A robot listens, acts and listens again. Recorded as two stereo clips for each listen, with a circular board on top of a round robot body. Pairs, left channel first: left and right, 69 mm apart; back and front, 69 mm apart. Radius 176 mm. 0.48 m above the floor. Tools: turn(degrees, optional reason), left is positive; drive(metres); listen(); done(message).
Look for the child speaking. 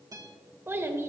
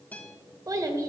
turn(degrees=-40, reason="The child speaking: 40° right.")
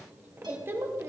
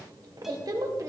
turn(degrees=-40, reason="The child speaking is now 40° right.")
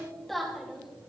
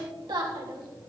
done("Facing the child speaking, 2 to 4 m away.")